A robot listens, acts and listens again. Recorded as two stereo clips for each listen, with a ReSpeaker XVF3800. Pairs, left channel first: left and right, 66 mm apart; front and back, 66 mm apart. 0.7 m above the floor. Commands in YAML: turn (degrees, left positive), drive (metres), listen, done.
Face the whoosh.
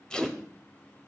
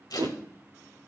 turn: -175
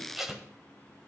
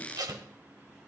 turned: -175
listen: true
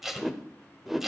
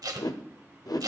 done: "Facing the whoosh, under 1 m away."